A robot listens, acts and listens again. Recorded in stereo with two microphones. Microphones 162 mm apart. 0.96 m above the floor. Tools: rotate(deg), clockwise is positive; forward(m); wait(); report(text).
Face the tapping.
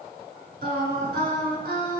wait()
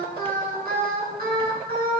wait()
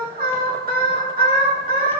report("I can't make out tapping to turn to.")